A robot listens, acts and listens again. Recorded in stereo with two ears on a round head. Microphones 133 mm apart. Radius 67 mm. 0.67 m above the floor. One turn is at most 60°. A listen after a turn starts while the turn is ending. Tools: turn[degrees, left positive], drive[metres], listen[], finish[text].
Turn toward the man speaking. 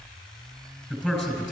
Action: turn[-30]
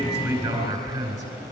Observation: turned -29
Thought: So it is at 145° right.
Action: turn[-60]
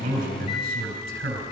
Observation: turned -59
Thought: The man speaking is now 85° right.
Action: turn[-60]
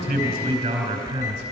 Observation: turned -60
Thought: The man speaking is now 30° right.
Action: turn[-30]
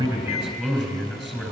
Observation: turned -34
Action: finish[Found it: a man speaking, straight ahead, 2 to 4 m away.]